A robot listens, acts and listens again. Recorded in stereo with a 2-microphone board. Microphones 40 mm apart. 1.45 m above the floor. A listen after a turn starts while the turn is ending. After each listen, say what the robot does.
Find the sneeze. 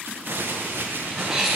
Turn 30° right.
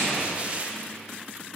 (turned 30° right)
Keep listening.
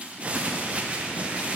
I heard a sneeze, but can't make it out now. It was about 20° left or 140° right.